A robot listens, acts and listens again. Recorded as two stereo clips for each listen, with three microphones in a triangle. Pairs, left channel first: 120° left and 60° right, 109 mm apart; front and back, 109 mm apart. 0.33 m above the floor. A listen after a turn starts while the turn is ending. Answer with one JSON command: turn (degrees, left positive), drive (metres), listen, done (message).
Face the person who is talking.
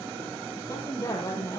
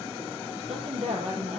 {"turn": -175}
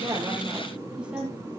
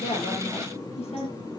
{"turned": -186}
{"turn": 20}
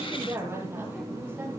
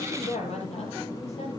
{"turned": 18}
{"turn": 10}
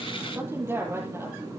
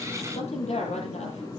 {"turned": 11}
{"done": "Found it: a woman speaking, straight ahead, over 4 m away."}